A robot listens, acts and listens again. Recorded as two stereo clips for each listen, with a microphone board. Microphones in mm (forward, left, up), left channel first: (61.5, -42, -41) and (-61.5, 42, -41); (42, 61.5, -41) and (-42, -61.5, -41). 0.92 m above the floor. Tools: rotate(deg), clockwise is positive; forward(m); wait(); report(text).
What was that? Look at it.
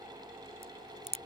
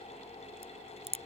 rotate(170)
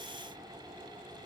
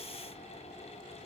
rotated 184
rotate(-15)
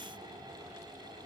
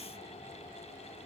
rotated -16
report("I heard a crack from this way, but can't make it out now.")